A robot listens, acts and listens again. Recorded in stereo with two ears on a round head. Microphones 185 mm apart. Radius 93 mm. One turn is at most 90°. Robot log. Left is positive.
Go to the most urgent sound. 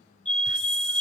cmd yaw +30
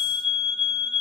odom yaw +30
note: So it is at 145° left.
cmd yaw +90
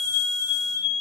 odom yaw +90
note: The fire alarm is now 60° left.
cmd yaw +60
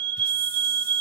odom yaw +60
note: The fire alarm is now 30° right.
cmd yaw -30
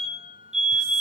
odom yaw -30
cmd fwd 1.0
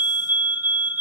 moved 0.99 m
note: The fire alarm is now 15° right.
cmd yaw -15
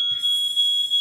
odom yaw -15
cmd fwd 1.0
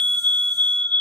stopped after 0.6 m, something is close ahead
note: The fire alarm is now 10° left.
cmd yaw +10
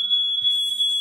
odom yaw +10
end: Arrived at the fire alarm, straight ahead.